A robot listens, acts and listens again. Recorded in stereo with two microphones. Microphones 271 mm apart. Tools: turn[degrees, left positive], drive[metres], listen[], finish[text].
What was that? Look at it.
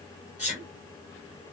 Thought: The sneeze: about 25° left or 155° left.
Action: turn[25]
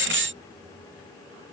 Action: listen[]
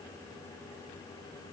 Action: finish[I heard a sneeze, but can't make it out now. It was about straight ahead or 130° left.]